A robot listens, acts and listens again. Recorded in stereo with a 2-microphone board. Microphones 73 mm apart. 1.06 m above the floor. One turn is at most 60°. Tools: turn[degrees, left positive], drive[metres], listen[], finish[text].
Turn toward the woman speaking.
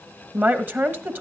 Thought: The woman speaking: about 25° right or 155° right.
Action: turn[-25]
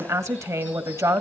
Thought: So it is at 125° right.
Action: turn[-60]
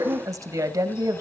Thought: The woman speaking is now 60° right.
Action: turn[-60]
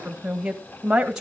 Thought: The woman speaking is now 15° right.
Action: turn[-15]
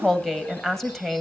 Action: finish[Found it: a woman speaking, straight ahead.]